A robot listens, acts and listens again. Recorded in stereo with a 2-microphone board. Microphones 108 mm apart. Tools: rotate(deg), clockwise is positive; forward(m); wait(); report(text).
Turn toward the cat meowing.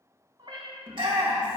rotate(50)
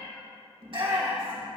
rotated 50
report("Found it: a cat meowing, straight ahead, 2 to 4 m away.")